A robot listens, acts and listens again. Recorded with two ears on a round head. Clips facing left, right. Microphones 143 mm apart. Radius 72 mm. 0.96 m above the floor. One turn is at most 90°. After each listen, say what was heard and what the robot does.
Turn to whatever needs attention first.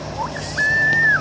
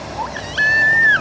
The baby crying: about 30° right or 150° right. Turn 30° right.
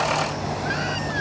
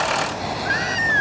Facing the baby crying.